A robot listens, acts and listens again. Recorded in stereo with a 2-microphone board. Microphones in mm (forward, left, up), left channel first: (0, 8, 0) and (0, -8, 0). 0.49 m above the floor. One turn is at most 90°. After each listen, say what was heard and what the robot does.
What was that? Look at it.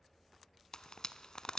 The frying: about 45° left or 135° left. Turn 45° left.
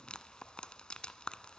So it is at 90° left. Turn 90° left.
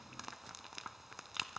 Found it: frying, straight ahead.